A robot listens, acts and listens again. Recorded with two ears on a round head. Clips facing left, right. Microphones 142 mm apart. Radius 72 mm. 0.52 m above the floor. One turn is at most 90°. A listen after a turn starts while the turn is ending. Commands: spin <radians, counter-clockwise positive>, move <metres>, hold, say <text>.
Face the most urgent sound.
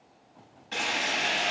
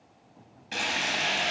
hold
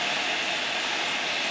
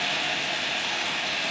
hold
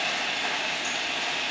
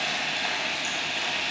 say I can't make out anything urgent to turn to.